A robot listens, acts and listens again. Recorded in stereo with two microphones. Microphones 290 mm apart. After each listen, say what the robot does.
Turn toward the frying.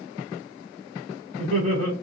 Keep listening.
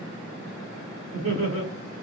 Keep listening.
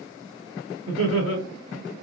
I can't make out frying, only laughter.